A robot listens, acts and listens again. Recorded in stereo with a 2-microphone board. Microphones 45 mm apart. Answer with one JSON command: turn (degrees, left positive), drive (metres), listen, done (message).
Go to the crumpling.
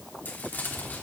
{"turn": 45}
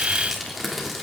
{"drive": 1.0}
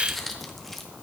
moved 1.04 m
{"drive": 1.0}
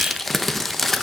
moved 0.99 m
{"drive": 1.0}
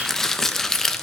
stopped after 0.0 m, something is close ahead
{"turn": 10}
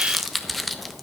{"done": "I am next to the crumpling."}